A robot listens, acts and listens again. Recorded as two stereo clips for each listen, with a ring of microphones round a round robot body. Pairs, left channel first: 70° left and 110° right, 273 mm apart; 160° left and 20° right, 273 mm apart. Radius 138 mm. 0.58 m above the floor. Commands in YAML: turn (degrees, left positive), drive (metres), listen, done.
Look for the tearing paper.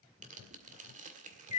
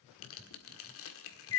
turn: -175
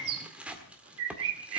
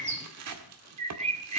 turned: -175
turn: -25
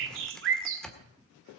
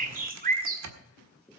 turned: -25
turn: -20
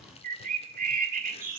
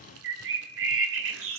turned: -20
listen: true
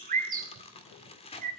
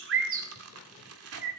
done: "Found it: tearing paper, straight ahead."